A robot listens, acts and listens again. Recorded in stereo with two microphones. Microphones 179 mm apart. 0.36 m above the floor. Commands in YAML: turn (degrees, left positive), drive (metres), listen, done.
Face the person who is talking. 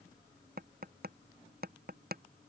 listen: true
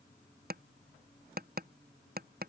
listen: true
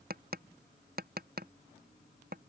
done: "I can't make out anyone speaking, only tapping."